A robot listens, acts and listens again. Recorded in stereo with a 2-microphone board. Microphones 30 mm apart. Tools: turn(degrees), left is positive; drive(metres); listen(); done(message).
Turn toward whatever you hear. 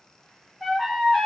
turn(degrees=-30)
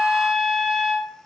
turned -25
turn(degrees=-150)
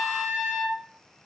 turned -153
done("Found it: a trumpet, straight ahead, under 1 m away.")